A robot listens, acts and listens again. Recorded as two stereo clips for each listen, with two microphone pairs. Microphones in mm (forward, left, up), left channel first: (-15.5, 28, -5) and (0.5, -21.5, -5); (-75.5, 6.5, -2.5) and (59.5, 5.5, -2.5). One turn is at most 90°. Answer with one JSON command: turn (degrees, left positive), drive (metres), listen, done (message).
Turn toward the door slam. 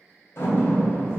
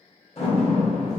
{"turn": 90}
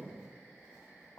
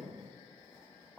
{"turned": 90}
{"turn": 50}
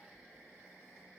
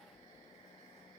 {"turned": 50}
{"done": "Facing where the door slam came from. I can't hear it now."}